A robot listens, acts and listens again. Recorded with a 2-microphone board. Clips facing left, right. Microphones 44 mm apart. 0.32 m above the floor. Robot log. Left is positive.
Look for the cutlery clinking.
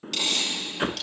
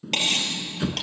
note: The cutlery clinking: about 50° right or 130° right.
cmd yaw -50
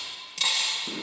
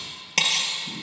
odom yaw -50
note: So it is at 80° right.
cmd yaw -80
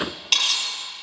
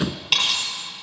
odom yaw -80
note: The cutlery clinking is now 10° right.
cmd yaw -10
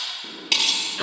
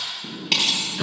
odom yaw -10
end: Found it: cutlery clinking, straight ahead, over 4 m away.